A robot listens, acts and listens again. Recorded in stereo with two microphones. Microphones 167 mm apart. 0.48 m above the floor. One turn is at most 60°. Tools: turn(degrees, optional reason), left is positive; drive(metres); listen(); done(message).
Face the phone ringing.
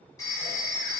turn(degrees=20, reason="The phone ringing: about 20° left or 160° left.")
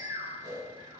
listen()
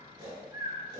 listen()
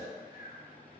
done("I heard a phone ringing, but can't make it out now. It was about straight ahead or 140° left.")